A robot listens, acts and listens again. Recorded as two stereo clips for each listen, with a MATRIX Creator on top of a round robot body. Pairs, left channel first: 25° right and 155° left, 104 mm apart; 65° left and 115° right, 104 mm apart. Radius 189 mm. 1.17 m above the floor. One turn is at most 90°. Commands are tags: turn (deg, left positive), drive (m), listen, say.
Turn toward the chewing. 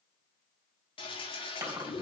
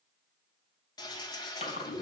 <turn deg="90"/>
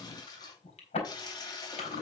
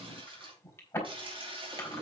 <say>Facing the chewing, 2 to 4 m away.</say>